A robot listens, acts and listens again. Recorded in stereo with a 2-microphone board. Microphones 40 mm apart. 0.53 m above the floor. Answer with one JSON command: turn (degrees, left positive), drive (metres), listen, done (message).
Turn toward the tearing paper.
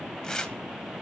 {"turn": 30}
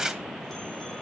{"turn": -15}
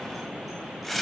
{"done": "Found it: tearing paper, straight ahead, 1 to 2 m away."}